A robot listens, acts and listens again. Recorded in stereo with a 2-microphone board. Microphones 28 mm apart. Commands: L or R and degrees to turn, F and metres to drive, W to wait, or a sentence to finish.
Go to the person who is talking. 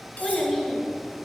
L30
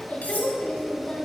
L135
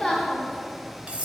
L20
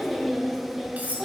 F1.0
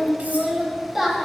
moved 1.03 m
R15
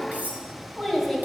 F1.0
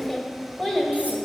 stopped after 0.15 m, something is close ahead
I am next to the child speaking.